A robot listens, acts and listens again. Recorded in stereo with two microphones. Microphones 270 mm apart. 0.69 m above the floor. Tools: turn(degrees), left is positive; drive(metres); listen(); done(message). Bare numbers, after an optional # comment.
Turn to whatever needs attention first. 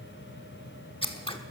listen()
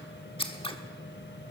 listen()
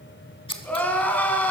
turn(30)
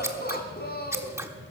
# So it is at 145° left.
turn(145)
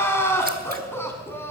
# The crying is now 10° left.
turn(10)
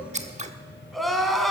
done("Found it: crying, straight ahead.")